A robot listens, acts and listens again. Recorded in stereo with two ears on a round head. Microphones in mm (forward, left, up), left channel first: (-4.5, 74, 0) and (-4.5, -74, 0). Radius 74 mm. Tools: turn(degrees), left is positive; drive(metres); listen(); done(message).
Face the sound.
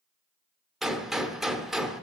turn(degrees=30)
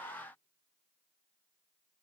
listen()
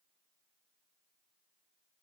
done("I heard a gunshot, but can't make it out now. It was about 30° right or 150° left.")